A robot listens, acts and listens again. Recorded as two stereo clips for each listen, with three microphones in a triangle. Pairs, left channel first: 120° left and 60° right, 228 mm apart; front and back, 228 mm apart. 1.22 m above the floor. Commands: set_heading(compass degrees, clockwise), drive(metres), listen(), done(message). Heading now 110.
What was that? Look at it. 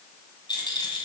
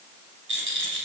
set_heading(280)
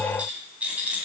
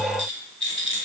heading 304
set_heading(279)
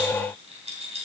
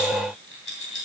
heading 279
done("Found it: a rattle, straight ahead.")